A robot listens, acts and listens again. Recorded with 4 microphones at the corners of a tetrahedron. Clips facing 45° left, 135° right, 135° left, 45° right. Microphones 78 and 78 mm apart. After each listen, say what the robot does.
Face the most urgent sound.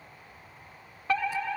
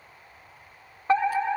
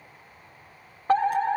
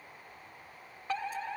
Turn 170° left.
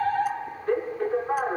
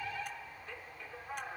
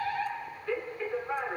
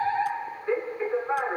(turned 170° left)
Turn 15° left.
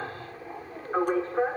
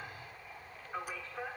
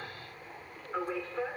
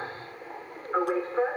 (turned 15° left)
Found it: a fire alarm, straight ahead.